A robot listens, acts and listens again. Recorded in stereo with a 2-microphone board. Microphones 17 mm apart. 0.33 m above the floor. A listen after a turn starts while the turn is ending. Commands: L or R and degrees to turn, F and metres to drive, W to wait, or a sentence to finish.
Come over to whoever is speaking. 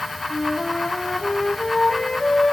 W
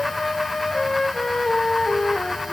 W
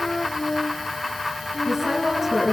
R35
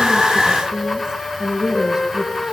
R110
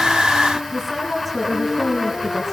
F1.0
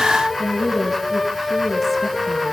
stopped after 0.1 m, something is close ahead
L10
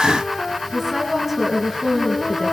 Blocked. The woman speaking is further on, straight ahead.